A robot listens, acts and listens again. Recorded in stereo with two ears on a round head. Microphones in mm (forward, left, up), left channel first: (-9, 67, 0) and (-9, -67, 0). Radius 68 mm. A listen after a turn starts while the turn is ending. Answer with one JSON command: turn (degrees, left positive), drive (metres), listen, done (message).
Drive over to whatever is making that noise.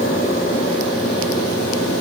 {"listen": true}
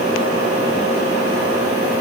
{"listen": true}
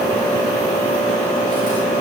{"done": "I can't make out anything to turn to."}